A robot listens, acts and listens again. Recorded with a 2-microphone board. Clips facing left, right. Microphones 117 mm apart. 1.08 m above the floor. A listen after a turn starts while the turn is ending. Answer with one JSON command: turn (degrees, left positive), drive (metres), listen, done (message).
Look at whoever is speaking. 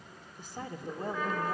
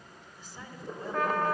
{"turn": 55}
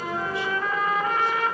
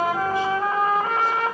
{"listen": true}
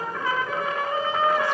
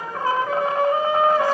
{"listen": true}
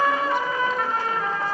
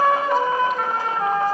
{"done": "I heard a woman speaking, but can't make it out now. It was about straight ahead or 70° left."}